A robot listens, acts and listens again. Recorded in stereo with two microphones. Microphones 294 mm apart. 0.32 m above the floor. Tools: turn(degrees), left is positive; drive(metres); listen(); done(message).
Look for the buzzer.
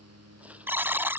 turn(degrees=-30)
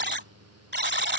turn(degrees=-145)
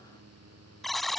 done("Found it: a buzzer, straight ahead.")